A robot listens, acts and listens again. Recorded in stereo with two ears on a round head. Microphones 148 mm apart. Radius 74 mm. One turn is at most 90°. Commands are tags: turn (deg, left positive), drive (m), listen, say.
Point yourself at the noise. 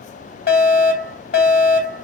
<turn deg="60"/>
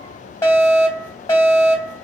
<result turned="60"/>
<turn deg="20"/>
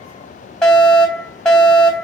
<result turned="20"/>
<say>Facing the fire alarm.</say>